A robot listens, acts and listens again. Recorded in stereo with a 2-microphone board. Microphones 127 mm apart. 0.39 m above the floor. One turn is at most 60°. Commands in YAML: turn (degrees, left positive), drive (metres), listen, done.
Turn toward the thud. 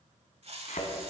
turn: 60
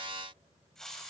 listen: true
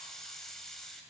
done: "I heard a thud, but can't make it out now. It was about 10° left or 50° left."